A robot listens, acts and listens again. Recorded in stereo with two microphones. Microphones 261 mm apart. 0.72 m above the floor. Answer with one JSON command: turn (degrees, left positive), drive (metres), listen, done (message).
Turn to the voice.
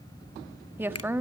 {"turn": -30}
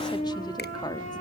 {"listen": true}
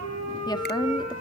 {"turn": 20}
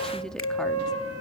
{"listen": true}
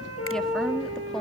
{"listen": true}
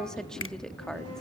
{"done": "Facing the woman speaking."}